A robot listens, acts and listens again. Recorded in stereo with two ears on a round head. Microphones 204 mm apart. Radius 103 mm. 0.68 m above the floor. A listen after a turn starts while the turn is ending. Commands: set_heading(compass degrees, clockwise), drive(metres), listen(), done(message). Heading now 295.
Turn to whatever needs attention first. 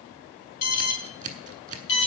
set_heading(205)
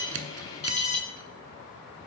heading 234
set_heading(204)
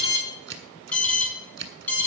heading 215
set_heading(205)
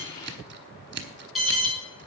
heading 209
done("Found it: an alarm, straight ahead, 2 to 4 m away.")